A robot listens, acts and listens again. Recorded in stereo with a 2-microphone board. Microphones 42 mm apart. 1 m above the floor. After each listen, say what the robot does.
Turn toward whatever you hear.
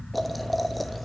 Turn 30° left.
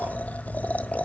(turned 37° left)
Turn 140° left.
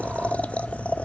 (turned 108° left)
Turn 35° left.
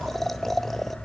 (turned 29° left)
Facing the boiling, under 1 m away.